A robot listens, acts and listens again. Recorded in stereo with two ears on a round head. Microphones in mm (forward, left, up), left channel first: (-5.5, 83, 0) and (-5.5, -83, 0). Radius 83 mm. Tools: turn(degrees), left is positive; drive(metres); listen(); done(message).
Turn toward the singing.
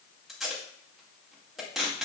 listen()
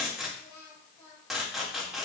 turn(degrees=30)
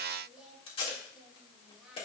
done("Facing the singing.")